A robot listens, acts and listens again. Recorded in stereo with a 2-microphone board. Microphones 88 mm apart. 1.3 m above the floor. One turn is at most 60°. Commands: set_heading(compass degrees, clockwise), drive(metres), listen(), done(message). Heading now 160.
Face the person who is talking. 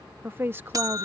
set_heading(185)
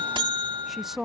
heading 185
done("Found it: a woman speaking, straight ahead.")